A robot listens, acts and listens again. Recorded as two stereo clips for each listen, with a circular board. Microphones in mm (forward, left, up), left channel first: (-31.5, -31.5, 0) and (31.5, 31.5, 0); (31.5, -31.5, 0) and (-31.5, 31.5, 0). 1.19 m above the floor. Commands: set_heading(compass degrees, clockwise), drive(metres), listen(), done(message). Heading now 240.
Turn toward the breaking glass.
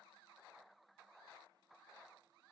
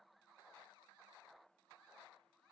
listen()
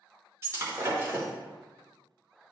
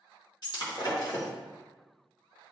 set_heading(255)
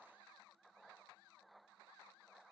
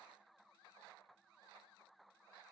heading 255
done("I heard breaking glass from this way, but can't make it out now.")